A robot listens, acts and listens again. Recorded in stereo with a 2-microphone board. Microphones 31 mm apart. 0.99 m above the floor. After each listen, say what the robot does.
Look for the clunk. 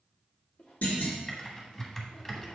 Turn 65° left.
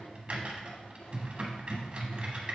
Keep listening.
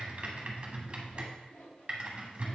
I heard a clunk, but can't make it out now. It was about straight ahead or 50° left.